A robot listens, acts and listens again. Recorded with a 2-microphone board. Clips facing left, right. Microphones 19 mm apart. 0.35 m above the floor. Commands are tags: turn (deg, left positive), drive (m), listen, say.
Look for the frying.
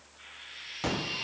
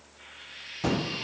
<turn deg="30"/>
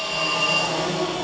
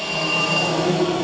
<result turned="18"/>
<listen/>
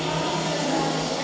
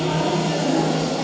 <listen/>
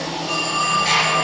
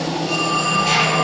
<say>I heard frying, but can't make it out now. It was about 10° right or 155° left.</say>